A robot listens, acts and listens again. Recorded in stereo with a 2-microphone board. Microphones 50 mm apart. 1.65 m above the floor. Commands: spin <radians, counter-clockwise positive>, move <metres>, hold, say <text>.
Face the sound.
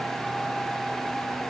hold
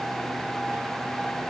hold
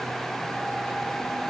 say I can't make out anything.